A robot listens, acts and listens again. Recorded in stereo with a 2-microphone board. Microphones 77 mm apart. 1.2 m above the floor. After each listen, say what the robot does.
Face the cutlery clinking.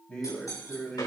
Turn 50° left.
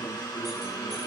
Keep listening.
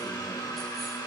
Keep listening.
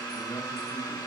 I heard cutlery clinking, but can't make it out now. It was about straight ahead or 80° left.